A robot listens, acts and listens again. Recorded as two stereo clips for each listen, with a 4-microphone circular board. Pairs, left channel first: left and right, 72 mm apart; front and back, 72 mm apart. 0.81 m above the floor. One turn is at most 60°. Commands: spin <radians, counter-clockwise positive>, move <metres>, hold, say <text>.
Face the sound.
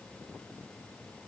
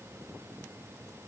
hold
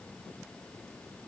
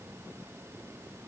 hold
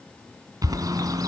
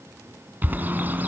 spin -1.05
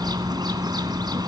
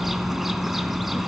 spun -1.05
spin -1.05
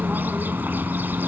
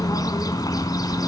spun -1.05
spin -0.44
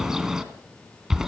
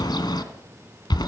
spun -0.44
spin -0.17
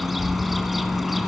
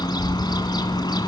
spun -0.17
say Facing the bird, 2 to 4 m away.